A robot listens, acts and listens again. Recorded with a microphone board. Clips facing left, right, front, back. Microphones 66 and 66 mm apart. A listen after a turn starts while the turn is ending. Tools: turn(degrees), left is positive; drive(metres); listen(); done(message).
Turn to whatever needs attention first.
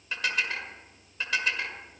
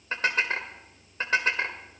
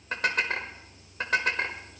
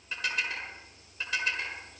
listen()
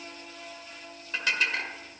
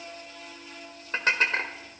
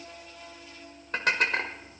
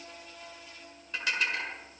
listen()
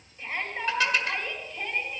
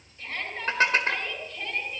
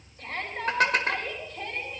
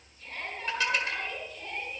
turn(degrees=20)
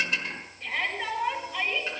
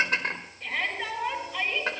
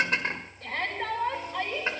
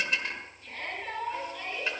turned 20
done("Facing the shout.")